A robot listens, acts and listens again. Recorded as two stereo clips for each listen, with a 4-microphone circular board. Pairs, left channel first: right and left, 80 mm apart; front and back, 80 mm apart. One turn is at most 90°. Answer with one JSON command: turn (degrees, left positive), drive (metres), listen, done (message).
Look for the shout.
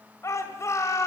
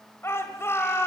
{"turn": -50}
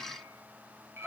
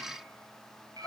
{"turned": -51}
{"done": "Found it: a shout, straight ahead."}